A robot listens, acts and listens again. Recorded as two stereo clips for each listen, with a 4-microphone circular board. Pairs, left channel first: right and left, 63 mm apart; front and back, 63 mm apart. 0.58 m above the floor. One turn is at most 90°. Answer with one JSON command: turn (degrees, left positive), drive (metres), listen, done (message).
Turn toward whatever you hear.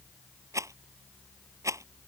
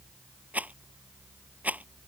{"turn": 90}
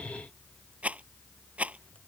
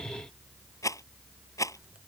{"turn": 25}
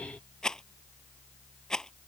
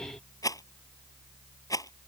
{"turn": -10}
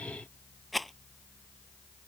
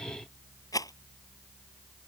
{"done": "Facing the rattle."}